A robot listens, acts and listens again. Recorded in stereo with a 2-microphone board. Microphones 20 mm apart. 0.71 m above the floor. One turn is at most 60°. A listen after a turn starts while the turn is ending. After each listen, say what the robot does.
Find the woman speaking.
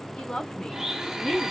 Turn 55° left.
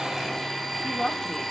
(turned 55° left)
Turn 50° left.
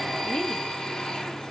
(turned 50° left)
Turn 20° left.
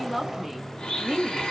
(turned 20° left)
Turn 15° right.
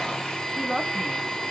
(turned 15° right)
Turn 15° right.
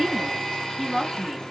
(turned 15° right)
Turn 10° right.
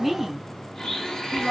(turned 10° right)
Found it: a woman speaking, straight ahead.